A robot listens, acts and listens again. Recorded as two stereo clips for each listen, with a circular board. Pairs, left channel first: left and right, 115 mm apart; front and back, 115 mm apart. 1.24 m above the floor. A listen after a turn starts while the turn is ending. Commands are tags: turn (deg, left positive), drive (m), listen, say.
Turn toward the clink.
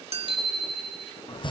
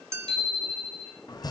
<turn deg="-115"/>
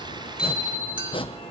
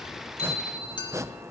<turn deg="-45"/>
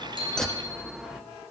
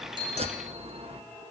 <listen/>
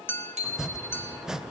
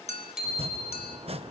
<turn deg="20"/>
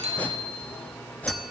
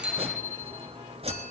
<listen/>
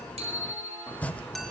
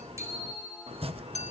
<say>Facing the clink.</say>